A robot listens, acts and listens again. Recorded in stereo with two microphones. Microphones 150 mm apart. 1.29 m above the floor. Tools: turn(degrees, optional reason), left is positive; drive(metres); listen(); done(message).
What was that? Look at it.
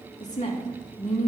turn(degrees=60, reason="The woman speaking: about 60° left or 120° left.")
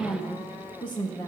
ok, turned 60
turn(degrees=25, reason="So it is at 25° left.")
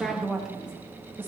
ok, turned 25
turn(degrees=-15, reason="The woman speaking is now 15° right.")
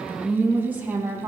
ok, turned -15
turn(degrees=-20, reason="The woman speaking is now 20° right.")
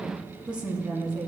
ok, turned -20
done("Found it: a woman speaking, straight ahead, 2 to 4 m away.")